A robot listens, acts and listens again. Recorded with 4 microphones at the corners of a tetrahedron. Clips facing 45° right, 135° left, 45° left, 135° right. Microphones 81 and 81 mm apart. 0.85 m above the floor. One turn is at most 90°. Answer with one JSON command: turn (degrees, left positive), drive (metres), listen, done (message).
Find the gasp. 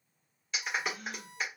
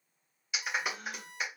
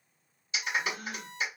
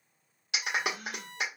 {"turn": 90}
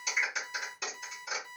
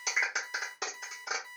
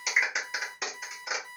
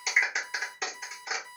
{"done": "I heard a gasp from this way, but can't make it out now."}